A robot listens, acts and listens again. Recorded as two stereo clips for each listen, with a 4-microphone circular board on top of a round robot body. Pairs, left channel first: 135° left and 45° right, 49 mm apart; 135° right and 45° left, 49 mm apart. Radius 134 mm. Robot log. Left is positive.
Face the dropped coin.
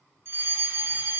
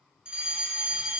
cmd idle
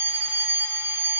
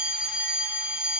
cmd idle
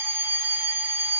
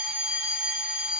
end: I can't make out a dropped coin to turn to.